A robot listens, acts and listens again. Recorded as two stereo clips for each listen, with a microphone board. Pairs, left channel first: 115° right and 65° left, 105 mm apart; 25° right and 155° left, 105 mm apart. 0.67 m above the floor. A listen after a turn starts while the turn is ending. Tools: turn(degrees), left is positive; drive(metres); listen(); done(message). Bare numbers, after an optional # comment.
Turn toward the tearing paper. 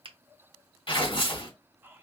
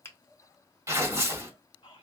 # The tearing paper: 145° right.
turn(-145)
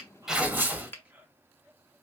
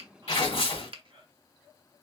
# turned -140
done("Found it: tearing paper, straight ahead, 1 to 2 m away.")